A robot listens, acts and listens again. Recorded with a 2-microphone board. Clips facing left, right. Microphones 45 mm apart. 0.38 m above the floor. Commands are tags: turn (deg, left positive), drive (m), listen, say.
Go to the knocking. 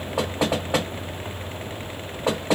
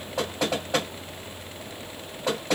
<turn deg="20"/>
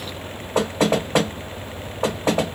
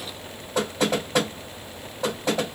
<turn deg="140"/>
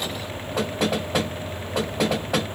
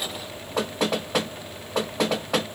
<drive m="1.0"/>
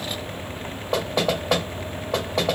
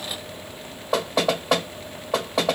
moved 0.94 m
<drive m="1.0"/>
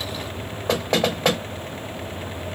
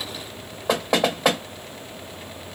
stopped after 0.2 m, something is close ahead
<turn deg="-10"/>
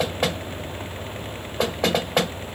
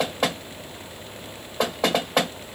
<say>Arrived at the knocking, straight ahead.</say>